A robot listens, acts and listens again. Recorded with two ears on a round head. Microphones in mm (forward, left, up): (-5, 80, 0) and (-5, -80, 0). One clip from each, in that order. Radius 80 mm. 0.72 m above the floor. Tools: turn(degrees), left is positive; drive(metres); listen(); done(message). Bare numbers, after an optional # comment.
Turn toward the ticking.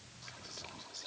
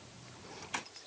listen()
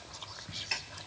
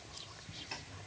# The ticking: about 55° left or 125° left.
turn(55)
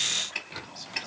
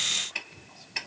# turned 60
done("Found it: ticking, straight ahead.")